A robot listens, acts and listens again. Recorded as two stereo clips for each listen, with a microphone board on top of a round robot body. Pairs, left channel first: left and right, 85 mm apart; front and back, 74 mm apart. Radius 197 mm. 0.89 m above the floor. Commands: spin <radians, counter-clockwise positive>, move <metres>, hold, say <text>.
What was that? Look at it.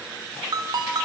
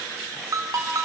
spin -2.36
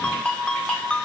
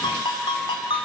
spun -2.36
spin 0.26
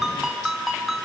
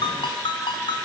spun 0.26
say Facing the ringtone, 1 to 2 m away.